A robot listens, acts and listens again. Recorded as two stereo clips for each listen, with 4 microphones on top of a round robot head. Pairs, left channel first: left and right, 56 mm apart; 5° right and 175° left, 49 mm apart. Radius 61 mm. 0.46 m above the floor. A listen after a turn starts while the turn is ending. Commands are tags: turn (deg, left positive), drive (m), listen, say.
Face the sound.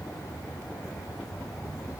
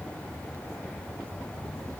<listen/>
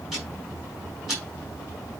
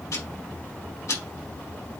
<say>Facing the ticking.</say>